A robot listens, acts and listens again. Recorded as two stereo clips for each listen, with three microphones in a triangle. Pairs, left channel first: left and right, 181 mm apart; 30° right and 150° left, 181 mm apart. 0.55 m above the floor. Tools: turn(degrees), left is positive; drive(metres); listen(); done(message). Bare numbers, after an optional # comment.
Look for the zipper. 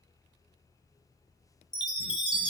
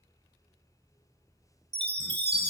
listen()
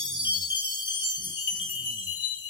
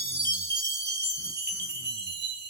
listen()
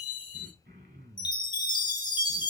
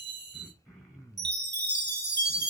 done("I can't make out a zipper, only throat clearing and a chime.")